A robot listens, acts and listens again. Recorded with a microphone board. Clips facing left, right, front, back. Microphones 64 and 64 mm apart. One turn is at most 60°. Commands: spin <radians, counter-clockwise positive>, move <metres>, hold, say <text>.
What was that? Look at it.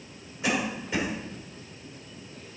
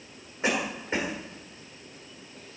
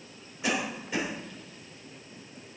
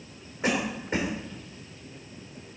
spin -1.05
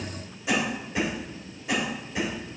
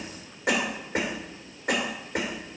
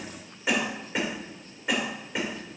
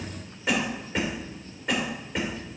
spin -1.05
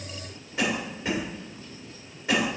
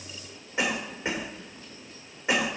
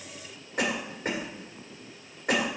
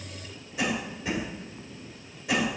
spin -0.44
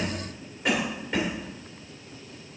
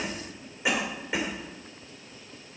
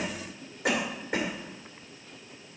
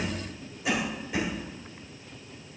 spin -0.17
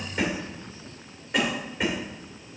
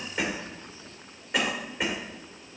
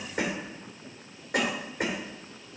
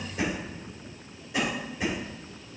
say Found it: a cough, straight ahead.